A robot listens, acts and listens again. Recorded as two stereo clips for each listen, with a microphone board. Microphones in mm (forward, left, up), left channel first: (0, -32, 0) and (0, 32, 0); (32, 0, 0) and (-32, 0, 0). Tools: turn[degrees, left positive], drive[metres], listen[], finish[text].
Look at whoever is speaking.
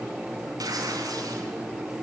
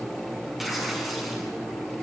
Action: listen[]
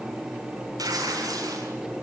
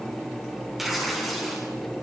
Action: listen[]
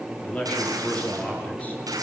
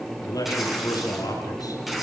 Thought: The man speaking: 25° right.
Action: turn[-25]
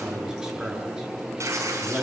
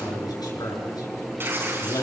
Thought: The man speaking is now 10° left.
Action: turn[10]
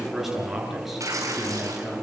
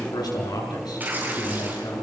Action: finish[Found it: a man speaking, straight ahead, over 4 m away.]